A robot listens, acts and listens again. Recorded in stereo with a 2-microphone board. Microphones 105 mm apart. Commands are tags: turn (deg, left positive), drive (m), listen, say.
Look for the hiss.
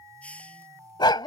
<turn deg="30"/>
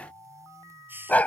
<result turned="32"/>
<turn deg="-20"/>
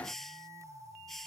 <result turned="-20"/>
<say>Found it: a hiss, straight ahead.</say>